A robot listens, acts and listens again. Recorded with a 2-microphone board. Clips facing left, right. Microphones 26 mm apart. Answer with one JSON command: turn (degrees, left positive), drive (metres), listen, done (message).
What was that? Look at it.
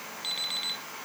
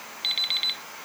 {"turn": -40}
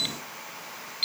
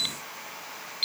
{"done": "Found it: an alarm clock, straight ahead."}